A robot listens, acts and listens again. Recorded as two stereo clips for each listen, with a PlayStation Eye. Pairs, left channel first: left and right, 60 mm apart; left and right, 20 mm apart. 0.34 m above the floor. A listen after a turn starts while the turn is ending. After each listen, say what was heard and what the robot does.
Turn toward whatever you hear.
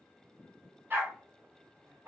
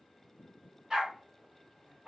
The dog barking: about 50° right or 130° right. Turn 50° right.
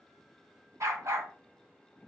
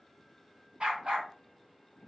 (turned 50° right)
So it is at 35° right. Turn 35° right.
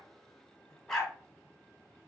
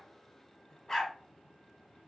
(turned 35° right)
The dog barking is now 10° left. Turn 10° left.
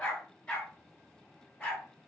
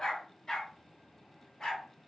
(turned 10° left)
The dog barking is now 15° left. Turn 15° left.
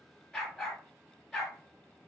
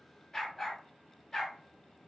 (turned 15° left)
Found it: a dog barking, straight ahead.